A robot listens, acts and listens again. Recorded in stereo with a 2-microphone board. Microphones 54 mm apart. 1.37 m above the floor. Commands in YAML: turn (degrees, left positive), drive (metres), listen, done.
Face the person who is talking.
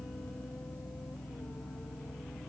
listen: true
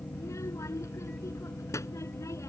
turn: 70
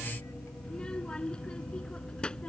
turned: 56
turn: 15
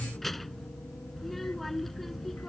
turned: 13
done: "Found it: a child speaking, straight ahead."